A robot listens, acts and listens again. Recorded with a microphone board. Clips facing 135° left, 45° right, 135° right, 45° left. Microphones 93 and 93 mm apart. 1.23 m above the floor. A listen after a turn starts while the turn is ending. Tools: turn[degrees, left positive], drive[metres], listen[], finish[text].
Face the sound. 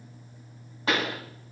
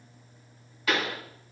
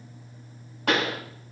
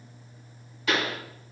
Thought: The pop: 170° right.
Action: turn[-170]
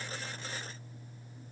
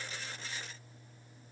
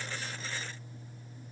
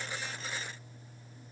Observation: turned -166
Action: finish[Facing where the pop came from. I can't hear it now.]